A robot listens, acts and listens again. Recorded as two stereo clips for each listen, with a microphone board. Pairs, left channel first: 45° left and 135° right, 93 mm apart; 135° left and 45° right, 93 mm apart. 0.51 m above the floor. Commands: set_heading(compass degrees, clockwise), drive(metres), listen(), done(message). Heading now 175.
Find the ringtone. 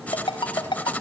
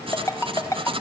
set_heading(100)
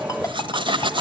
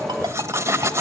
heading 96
listen()
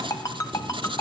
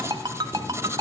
done("Facing the ringtone.")